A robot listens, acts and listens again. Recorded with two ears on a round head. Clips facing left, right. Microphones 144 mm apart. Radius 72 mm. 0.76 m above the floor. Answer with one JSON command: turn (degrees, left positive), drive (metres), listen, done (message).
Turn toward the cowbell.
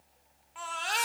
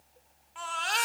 {"listen": true}
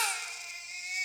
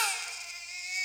{"listen": true}
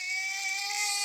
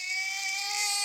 {"done": "I can't make out a cowbell, only a baby crying."}